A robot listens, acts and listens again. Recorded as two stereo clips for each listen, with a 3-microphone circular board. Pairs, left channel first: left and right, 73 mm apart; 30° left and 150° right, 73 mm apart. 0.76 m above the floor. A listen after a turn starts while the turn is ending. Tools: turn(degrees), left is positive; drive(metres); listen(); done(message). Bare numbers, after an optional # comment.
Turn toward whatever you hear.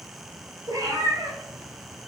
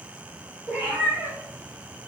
# The cat meowing: 90° right.
turn(-90)
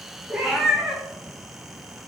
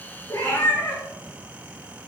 # The cat meowing is now 10° right.
turn(-10)
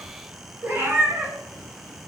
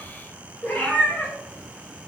# The cat meowing is now 40° right.
turn(-40)
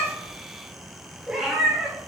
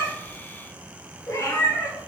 # The cat meowing is now 10° right.
turn(-10)
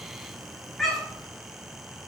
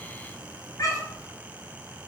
done("Found it: a cat meowing, straight ahead.")